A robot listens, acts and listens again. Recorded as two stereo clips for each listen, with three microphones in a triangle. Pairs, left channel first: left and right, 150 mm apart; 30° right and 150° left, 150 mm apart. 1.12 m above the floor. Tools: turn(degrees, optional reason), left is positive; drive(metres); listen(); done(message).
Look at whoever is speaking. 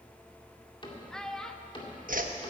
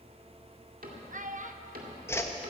turn(degrees=175, reason="The child speaking: 175° left.")
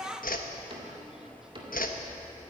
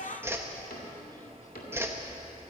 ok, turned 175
done("Facing the child speaking, under 1 m away.")